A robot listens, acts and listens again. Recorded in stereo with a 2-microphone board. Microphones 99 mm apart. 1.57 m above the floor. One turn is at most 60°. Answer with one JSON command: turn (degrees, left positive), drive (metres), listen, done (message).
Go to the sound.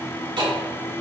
{"turn": -60}
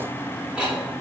{"turn": -10}
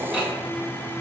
{"drive": 1.0}
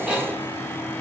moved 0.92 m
{"listen": true}
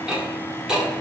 {"drive": 1.0}
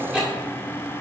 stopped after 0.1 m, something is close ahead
{"turn": -10}
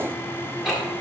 {"done": "I am next to the ticking."}